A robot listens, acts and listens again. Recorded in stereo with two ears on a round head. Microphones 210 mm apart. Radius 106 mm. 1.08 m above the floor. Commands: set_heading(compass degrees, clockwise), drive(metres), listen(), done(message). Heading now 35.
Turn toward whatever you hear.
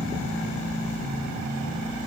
listen()
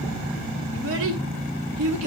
set_heading(125)
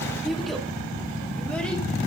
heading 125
done("Facing the child speaking, 2 to 4 m away.")